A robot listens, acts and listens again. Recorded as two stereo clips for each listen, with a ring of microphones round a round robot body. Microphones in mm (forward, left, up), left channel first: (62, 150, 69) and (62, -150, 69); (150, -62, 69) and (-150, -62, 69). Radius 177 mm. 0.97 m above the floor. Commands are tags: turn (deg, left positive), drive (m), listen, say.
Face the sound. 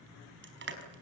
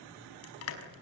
<turn deg="-40"/>
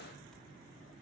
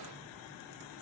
<listen/>
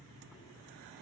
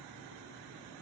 <listen/>
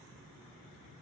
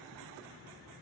<say>I heard crushing from this way, but can't make it out now.</say>